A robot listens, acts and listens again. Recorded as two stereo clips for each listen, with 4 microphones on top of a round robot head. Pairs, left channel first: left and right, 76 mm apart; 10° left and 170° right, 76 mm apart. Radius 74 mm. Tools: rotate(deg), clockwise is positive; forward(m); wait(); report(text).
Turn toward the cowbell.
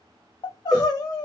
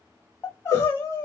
rotate(25)
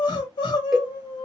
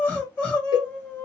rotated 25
report("Facing the cowbell, 1 to 2 m away.")